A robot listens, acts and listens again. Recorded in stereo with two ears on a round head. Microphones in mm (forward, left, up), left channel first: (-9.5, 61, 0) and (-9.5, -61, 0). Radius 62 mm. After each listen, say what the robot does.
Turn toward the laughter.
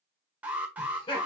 Turn 35° left.
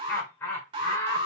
Turn 25° left.
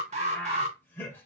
Turn 15° left.
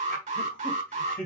Turn 15° left.
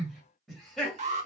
Facing the laughter, 2 to 4 m away.